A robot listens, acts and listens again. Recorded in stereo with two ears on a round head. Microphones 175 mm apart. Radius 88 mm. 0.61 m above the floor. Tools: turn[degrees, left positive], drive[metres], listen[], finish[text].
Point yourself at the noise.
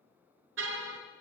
Thought: The car horn: about 70° right or 110° right.
Action: turn[-70]
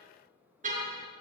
Thought: So it is at 40° right.
Action: turn[-40]
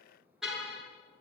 Action: finish[Found it: a car horn, straight ahead.]